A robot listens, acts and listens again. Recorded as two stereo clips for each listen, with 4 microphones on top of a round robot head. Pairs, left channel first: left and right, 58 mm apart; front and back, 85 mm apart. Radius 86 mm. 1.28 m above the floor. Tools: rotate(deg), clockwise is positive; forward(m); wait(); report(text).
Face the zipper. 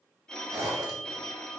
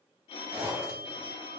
rotate(110)
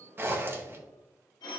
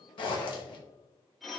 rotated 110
rotate(40)
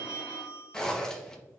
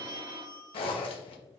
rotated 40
rotate(-10)
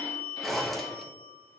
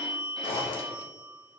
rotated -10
report("Facing the zipper, 1 to 2 m away.")